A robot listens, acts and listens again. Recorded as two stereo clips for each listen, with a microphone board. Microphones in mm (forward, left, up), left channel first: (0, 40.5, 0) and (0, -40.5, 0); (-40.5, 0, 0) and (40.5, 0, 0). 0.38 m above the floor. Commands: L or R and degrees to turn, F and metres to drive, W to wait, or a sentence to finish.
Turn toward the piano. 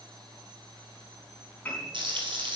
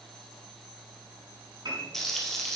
L20
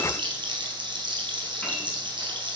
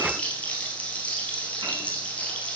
W
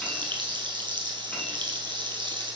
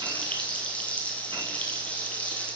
W
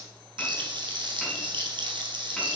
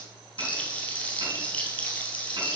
Facing where the piano came from. I can't hear it now.